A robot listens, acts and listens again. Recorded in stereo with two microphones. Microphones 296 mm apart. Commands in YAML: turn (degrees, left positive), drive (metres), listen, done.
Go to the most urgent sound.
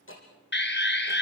turn: 35
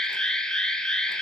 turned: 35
drive: 1.0
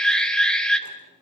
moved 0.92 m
drive: 1.0
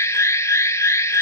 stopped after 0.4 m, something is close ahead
turn: 10
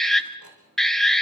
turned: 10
done: "Arrived at the alarm, straight ahead."